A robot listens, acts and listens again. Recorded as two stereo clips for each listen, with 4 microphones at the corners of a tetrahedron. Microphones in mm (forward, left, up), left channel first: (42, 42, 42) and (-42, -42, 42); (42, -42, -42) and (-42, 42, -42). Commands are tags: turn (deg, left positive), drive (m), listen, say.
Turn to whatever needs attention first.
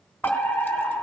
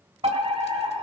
<turn deg="125"/>
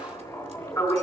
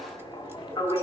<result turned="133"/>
<say>Found it: a fire alarm, straight ahead, over 4 m away.</say>